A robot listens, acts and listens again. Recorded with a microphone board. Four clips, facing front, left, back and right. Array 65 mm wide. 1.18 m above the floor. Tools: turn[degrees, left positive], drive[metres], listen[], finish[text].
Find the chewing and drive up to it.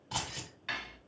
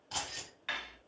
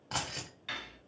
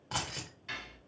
Action: listen[]
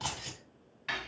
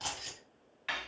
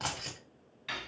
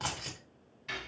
Action: listen[]
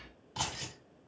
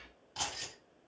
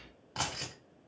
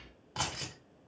Action: finish[I can't make out chewing to turn to.]